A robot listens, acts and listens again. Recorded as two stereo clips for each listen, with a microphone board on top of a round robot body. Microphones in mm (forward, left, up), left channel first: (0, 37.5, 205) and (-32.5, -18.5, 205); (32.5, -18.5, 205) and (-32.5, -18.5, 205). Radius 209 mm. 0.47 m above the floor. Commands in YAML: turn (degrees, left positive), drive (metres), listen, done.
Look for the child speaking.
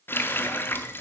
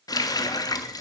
listen: true
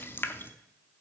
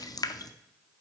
listen: true
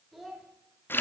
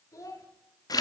turn: -30
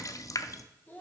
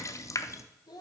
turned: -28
done: "Found it: a child speaking, straight ahead."